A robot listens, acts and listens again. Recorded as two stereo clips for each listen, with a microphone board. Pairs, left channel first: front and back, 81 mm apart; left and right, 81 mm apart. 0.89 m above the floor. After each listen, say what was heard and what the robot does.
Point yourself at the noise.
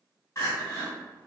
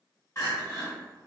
The crying: 40° left. Turn 40° left.
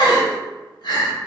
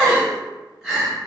Facing the crying, 1 to 2 m away.